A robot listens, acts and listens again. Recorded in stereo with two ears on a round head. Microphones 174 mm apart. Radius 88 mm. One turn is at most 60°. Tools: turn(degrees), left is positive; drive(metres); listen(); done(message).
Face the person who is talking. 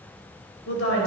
turn(degrees=60)
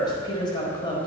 turn(degrees=25)
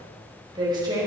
turn(degrees=-20)
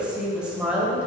done("Facing the woman speaking.")